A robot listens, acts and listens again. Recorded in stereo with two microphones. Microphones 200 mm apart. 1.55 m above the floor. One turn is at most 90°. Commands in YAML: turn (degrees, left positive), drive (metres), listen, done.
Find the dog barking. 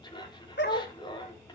turn: 55
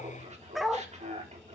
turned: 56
done: "Found it: a dog barking, straight ahead."